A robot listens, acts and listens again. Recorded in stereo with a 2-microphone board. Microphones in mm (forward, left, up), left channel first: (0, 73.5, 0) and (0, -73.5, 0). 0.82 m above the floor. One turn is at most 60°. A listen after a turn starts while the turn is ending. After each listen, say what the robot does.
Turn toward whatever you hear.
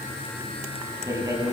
Turn 20° right.
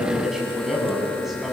Found it: a man speaking, straight ahead.